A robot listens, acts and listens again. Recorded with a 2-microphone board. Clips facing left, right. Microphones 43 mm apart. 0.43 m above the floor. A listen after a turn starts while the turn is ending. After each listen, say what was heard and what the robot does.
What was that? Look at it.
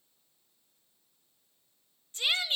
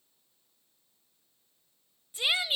Turn 30° right.
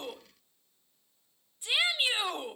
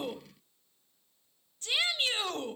So it is at 15° left. Turn 15° left.
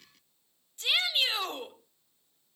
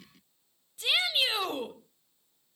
Facing the shout.